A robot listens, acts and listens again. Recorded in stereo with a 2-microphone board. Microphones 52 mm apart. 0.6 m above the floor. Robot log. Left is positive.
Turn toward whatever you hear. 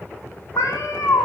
cmd yaw +90
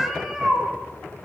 note: So it is at 10° right.
cmd yaw -10
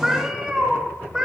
note: The cat meowing is now 15° right.
cmd yaw -15
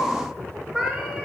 end: Found it: a cat meowing, straight ahead, 2 to 4 m away.